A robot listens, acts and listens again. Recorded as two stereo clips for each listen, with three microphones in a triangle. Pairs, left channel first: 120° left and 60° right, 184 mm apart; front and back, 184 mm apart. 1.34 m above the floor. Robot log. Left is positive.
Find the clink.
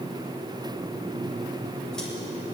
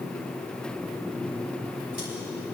cmd idle
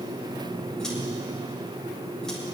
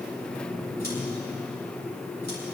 cmd idle
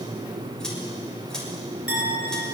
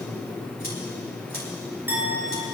note: The clink: 100° left.
cmd yaw +100
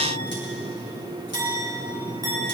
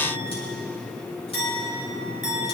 note: The clink is now 10° left.
cmd yaw +10
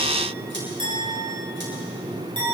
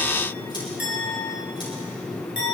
end: Found it: a clink, straight ahead.